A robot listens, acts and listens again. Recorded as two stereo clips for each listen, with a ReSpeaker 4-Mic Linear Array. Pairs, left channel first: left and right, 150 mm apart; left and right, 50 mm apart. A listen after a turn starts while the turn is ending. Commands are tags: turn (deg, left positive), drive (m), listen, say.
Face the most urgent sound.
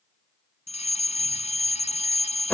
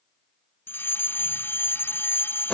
<turn deg="45"/>
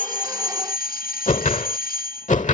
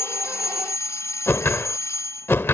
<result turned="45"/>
<turn deg="85"/>
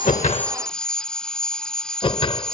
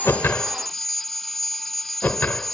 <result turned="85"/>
<say>Found it: a fire alarm, straight ahead.</say>